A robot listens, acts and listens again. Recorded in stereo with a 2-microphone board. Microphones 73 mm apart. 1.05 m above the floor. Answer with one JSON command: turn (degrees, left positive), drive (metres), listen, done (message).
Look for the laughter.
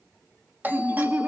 {"turn": -25}
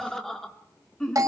{"turn": 10}
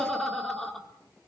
{"done": "Found it: laughter, straight ahead, 2 to 4 m away."}